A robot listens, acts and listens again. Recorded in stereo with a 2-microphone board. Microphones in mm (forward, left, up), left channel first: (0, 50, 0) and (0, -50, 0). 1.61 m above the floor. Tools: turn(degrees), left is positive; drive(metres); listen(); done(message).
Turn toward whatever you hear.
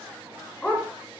turn(degrees=30)
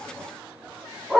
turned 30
done("Facing the dog barking.")